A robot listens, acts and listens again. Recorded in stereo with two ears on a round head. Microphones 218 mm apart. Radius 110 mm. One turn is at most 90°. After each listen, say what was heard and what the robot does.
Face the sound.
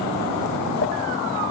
Keep listening.
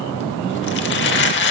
The crumpling: about 50° left or 130° left. Turn 50° left.
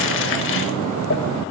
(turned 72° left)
So it is at 55° left. Turn 55° left.
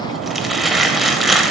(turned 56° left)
Found it: crumpling, straight ahead, under 1 m away.